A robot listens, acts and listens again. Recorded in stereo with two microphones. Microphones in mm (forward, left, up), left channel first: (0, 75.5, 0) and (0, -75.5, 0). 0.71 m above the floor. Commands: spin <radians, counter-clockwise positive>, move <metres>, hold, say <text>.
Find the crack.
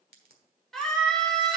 spin -1.57
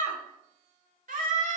say I heard a crack from this way, but can't make it out now.